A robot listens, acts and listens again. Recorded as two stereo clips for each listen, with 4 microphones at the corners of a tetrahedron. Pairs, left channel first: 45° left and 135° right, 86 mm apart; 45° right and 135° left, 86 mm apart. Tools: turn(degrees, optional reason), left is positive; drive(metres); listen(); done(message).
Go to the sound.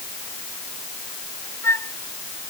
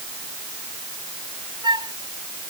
turn(degrees=105, reason="The flute: 105° left.")
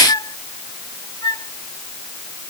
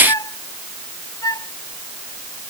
drive(metres=1.0)
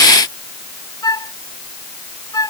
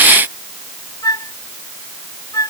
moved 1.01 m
drive(metres=1.0)
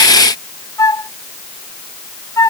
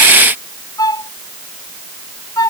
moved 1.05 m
drive(metres=1.0)
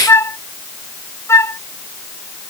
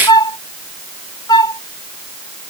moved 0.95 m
turn(degrees=-10, reason="The flute is now 10° right.")
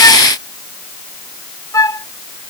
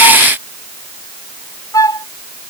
drive(metres=1.0)
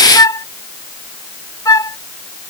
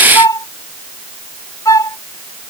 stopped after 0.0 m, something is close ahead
done("Arrived at the flute, straight ahead.")